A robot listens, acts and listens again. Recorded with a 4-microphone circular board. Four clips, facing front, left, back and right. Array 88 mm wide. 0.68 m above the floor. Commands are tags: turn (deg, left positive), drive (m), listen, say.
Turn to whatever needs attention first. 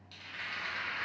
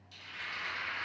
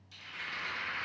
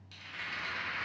<listen/>
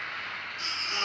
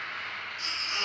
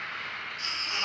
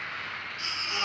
<turn deg="-25"/>
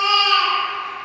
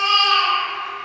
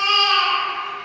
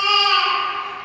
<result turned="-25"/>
<say>Found it: a baby crying, straight ahead, 1 to 2 m away.</say>